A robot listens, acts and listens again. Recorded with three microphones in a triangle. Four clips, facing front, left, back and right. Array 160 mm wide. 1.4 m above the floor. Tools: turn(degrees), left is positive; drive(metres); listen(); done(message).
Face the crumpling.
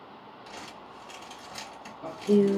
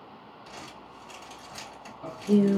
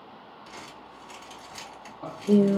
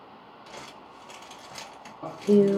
turn(degrees=-70)
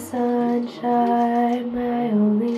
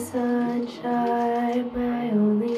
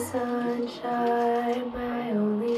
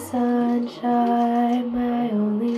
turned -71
listen()
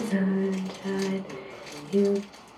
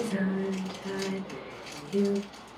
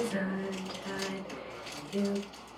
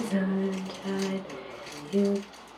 done("Facing the crumpling.")